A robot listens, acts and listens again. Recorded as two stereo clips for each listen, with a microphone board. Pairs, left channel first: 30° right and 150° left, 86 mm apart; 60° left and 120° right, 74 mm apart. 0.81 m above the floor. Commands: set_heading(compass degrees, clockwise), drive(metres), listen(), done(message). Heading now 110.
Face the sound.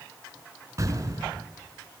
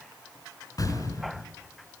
set_heading(15)
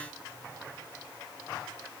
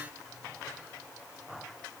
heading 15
done("Facing where the explosion came from. I can't hear it now.")